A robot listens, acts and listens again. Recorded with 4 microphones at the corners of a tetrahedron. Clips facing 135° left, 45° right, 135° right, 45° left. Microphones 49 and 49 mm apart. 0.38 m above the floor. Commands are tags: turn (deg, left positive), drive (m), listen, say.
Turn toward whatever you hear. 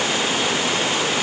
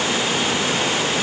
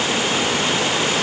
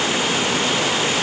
<listen/>
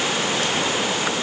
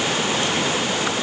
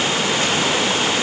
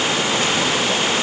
<listen/>
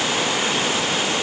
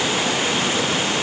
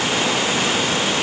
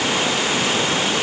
<say>I can't make out anything.</say>